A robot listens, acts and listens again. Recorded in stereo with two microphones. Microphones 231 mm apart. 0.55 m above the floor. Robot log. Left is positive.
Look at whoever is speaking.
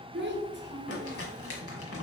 note: The child speaking: about 50° right or 130° right.
cmd yaw -50
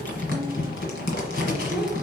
end: Found it: a child speaking, straight ahead, under 1 m away.